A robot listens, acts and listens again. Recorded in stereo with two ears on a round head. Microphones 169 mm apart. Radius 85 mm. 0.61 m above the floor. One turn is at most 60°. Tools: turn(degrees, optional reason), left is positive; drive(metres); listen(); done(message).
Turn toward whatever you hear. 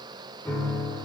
turn(degrees=30)
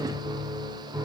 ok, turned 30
turn(degrees=-15, reason="So it is at 15° right.")
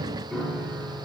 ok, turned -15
done("Found it: a piano, straight ahead, 1 to 2 m away.")